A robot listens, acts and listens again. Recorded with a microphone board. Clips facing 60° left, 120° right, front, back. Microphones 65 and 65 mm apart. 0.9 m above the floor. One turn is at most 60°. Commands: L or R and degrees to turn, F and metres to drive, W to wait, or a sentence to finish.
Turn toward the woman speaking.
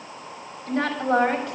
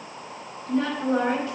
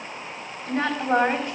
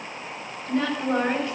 L60
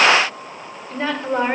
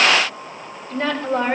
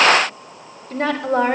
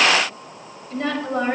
R15
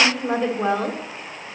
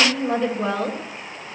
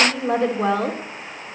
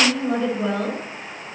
Found it: a woman speaking, straight ahead.